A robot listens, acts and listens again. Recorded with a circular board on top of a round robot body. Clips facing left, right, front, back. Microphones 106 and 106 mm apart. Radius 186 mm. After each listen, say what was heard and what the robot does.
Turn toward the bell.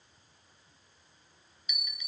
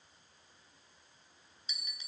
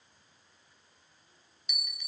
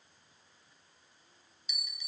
The bell: 30° right. Turn 30° right.
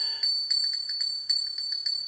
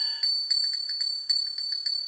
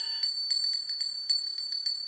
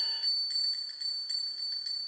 Found it: a bell, straight ahead, 2 to 4 m away.